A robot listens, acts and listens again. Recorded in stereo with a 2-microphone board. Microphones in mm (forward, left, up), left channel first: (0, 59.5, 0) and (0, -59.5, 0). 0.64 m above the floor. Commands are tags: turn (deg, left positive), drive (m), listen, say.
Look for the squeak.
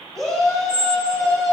<turn deg="-75"/>
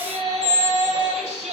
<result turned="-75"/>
<turn deg="-15"/>
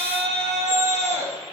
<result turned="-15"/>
<listen/>
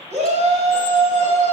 <listen/>
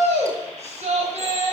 <say>I heard a squeak from this way, but can't make it out now.</say>